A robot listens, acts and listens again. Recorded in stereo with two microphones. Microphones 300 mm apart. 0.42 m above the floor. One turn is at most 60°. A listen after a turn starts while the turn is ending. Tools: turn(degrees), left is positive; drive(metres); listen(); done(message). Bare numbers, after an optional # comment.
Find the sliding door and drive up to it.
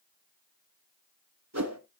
listen()
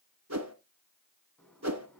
turn(30)
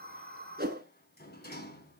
# So it is at 145° left.
turn(60)
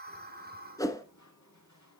# The sliding door is now 105° left.
turn(60)
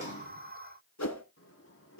# The sliding door is now 50° left.
turn(50)
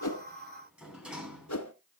drive(1.0)
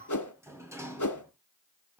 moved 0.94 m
# The sliding door is now 10° right.
turn(-10)
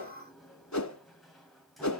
drive(1.0)
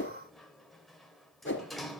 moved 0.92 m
drive(1.0)
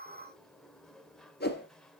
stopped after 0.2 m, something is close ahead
done("Arrived at the sliding door, straight ahead.")